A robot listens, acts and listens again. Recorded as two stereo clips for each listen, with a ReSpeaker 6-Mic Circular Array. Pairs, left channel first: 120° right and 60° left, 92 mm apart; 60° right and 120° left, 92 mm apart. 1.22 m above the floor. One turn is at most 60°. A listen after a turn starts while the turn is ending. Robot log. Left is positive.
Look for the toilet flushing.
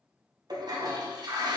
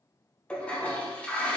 note: The toilet flushing: 20° left.
cmd yaw +20
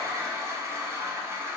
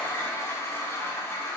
end: Facing the toilet flushing, under 1 m away.